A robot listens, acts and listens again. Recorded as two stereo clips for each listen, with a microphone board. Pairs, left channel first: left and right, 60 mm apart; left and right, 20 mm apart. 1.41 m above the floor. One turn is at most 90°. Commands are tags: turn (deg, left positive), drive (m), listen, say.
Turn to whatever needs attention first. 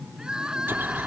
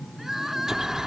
<turn deg="-30"/>
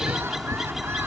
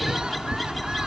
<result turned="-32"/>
<listen/>
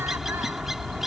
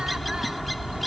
<listen/>
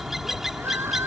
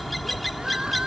<say>I heard crying, but can't make it out now. It was about 20° left or 135° right.</say>